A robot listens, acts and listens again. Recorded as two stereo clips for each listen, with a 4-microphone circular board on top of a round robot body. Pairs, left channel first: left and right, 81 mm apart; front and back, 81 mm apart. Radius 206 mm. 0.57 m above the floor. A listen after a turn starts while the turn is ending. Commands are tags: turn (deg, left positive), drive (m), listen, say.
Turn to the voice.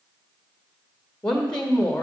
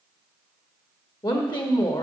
<turn deg="10"/>
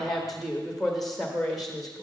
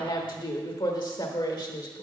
<say>Facing the woman speaking.</say>